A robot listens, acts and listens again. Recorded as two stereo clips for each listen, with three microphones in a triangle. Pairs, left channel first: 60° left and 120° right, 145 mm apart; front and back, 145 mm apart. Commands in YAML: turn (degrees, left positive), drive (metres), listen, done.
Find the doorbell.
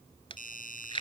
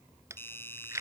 turn: 75
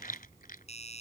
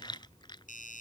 turn: 20
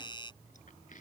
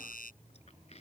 done: "Found it: a doorbell, straight ahead."